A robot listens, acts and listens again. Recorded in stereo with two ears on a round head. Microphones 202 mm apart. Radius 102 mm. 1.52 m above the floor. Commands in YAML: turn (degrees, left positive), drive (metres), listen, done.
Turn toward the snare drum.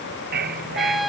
listen: true
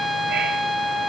listen: true
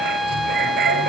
done: "I can't make out a snare drum, only a dog barking and a trumpet."